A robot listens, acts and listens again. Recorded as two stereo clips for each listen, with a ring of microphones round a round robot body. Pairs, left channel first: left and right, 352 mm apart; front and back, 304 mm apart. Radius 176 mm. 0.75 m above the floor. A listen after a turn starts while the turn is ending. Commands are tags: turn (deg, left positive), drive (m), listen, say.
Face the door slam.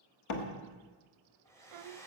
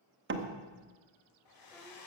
<turn deg="130"/>
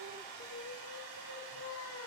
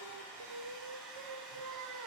<say>Facing where the door slam came from. I can't hear it now.</say>